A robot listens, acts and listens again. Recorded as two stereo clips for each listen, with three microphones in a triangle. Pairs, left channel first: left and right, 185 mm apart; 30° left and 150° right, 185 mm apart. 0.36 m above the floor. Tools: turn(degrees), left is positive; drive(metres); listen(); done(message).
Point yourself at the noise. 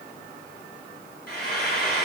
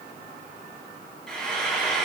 turn(degrees=115)
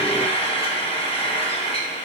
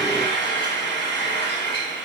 turn(degrees=35)
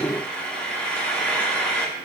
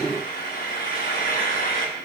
done("Facing the frying, 1 to 2 m away.")